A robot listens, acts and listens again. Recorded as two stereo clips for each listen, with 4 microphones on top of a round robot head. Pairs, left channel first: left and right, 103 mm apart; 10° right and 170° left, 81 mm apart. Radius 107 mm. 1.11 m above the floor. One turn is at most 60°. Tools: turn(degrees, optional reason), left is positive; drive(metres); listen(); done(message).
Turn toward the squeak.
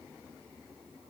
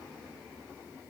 listen()
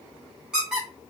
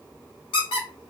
done("Facing the squeak.")